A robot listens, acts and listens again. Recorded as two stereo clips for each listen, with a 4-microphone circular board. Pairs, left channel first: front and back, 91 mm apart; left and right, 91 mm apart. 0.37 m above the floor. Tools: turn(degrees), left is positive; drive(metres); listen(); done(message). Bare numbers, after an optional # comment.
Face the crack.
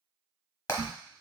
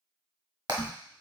# The crack: 155° left.
turn(155)
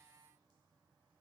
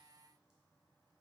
done("I heard a crack from this way, but can't make it out now.")